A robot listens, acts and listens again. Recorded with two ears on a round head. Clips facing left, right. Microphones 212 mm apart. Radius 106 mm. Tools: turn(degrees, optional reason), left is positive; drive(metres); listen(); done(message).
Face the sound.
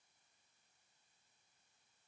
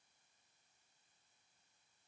listen()
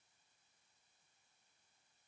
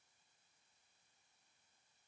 listen()
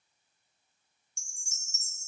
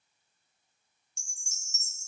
turn(degrees=30)
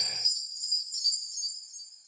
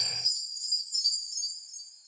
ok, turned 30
turn(degrees=-10, reason="So it is at 10° right.")
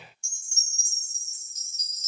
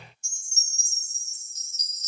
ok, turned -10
done("Facing the chime.")